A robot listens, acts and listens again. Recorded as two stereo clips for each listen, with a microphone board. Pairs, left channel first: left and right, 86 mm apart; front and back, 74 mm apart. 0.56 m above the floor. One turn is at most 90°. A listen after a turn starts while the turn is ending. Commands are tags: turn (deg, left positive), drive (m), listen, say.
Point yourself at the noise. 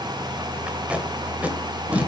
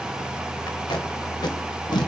<turn deg="-15"/>
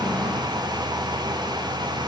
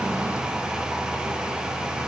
<listen/>
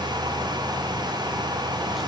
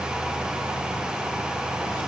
<listen/>
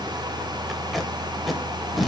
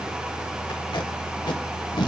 <say>Found it: tape being pulled, straight ahead.</say>